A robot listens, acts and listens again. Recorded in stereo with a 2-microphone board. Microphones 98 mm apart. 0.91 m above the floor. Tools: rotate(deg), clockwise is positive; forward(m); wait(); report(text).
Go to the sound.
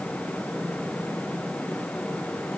wait()
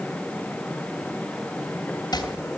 rotate(-45)
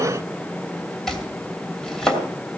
forward(1.0)
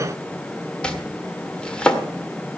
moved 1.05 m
rotate(-10)
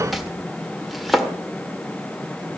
forward(1.0)
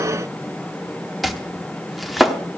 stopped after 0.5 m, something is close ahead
report("I am next to the chopping.")